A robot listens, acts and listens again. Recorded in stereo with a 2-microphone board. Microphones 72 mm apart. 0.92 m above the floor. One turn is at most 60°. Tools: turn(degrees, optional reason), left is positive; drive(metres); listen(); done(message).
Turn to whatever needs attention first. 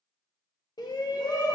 turn(degrees=60, reason="The shout: about 65° left or 115° left.")
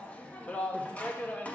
turn(degrees=20, reason="So it is at 20° left.")
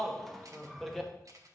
done("Facing the shout.")